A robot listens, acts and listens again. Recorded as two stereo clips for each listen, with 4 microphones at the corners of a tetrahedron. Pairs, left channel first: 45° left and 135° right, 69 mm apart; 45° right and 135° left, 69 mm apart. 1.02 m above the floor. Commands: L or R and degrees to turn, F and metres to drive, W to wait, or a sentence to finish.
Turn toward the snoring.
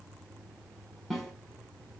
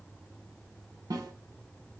W
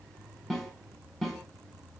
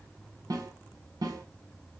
W
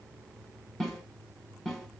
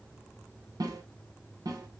I can't make out snoring to turn to.